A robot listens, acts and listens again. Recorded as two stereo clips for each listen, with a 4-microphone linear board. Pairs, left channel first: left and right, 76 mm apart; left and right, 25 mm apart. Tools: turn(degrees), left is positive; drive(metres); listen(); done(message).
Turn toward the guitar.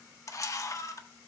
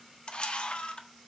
listen()
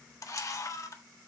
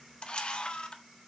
listen()
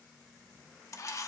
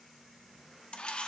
done("I can't make out a guitar to turn to.")